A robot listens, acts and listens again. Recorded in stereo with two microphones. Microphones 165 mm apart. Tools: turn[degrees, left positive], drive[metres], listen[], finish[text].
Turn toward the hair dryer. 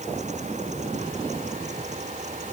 Action: listen[]
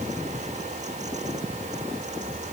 Action: listen[]
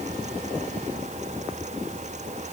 Action: finish[I can't make out a hair dryer to turn to.]